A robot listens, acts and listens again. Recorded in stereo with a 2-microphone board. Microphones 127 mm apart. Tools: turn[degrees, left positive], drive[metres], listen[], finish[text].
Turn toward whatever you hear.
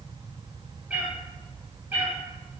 Thought: The cat meowing: about 15° right or 165° right.
Action: turn[-15]
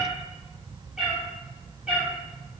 Action: turn[-30]
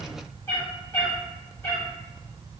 Thought: So it is at 20° left.
Action: turn[20]
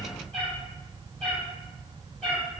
Action: finish[Facing the cat meowing, 2 to 4 m away.]